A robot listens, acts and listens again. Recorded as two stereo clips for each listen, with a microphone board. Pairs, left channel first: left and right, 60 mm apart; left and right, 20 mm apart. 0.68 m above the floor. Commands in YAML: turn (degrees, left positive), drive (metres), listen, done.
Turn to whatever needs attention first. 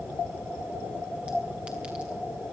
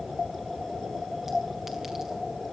listen: true
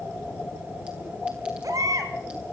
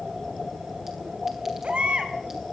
turn: -90
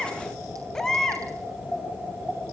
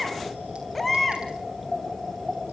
done: "Facing the baby crying."